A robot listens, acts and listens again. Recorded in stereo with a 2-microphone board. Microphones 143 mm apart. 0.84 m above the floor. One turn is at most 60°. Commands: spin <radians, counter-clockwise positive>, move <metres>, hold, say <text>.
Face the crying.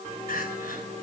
spin 1.05
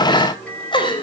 spin 0.61
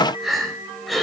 say Found it: crying, straight ahead, 2 to 4 m away.